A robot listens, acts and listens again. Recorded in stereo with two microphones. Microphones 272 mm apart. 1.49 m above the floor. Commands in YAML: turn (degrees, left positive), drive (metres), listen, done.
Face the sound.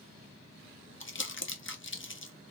turn: 45
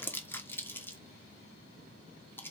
turn: 10
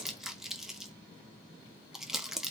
done: "Facing the crumpling, under 1 m away."